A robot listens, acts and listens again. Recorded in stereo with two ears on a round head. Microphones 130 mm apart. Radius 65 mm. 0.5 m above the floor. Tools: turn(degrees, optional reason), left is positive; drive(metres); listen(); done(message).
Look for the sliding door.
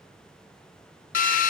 listen()
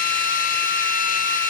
listen()
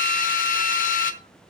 done("I can't make out a sliding door, only a drill.")